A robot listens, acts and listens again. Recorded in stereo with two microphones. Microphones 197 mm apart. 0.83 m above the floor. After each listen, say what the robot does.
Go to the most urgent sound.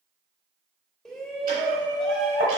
Turn 30° left.
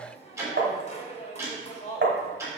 Turn 145° left.
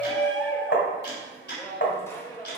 Turn 10° left.
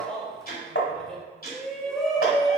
Drive 1.0 m forward.
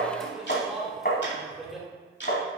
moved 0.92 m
Drive 1.0 m forward.
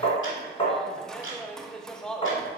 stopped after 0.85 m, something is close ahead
I am next to the shout.